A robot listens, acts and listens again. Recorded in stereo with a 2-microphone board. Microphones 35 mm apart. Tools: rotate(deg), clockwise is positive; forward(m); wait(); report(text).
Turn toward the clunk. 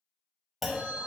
rotate(30)
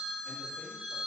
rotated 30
wait()
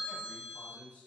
report("I heard a clunk, but can't make it out now. It was about 25° left or 145° right.")